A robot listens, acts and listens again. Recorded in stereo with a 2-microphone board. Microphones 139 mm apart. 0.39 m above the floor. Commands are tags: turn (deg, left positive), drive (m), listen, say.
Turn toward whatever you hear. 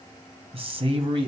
<turn deg="-40"/>
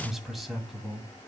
<say>Found it: a man speaking, straight ahead.</say>